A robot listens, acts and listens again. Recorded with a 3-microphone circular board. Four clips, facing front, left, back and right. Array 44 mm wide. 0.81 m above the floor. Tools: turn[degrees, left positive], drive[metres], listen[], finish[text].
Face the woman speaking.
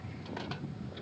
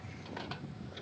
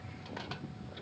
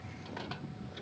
Action: listen[]
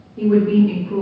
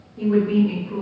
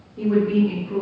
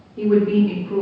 Thought: The woman speaking: 70° right.
Action: turn[-70]
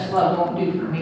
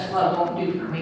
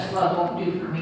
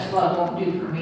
Thought: The woman speaking is now 35° left.
Action: turn[35]
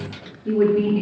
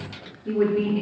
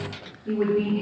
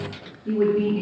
Thought: The woman speaking is now 20° left.
Action: turn[20]
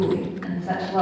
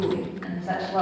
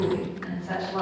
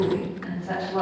Thought: The woman speaking is now 25° left.
Action: turn[25]
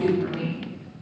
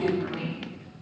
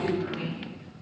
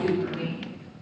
Thought: The woman speaking is now 25° left.
Action: turn[25]
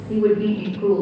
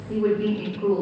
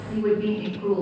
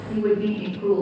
Thought: The woman speaking is now 10° left.
Action: turn[10]
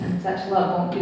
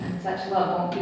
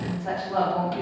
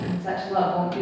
Action: finish[Found it: a woman speaking, straight ahead.]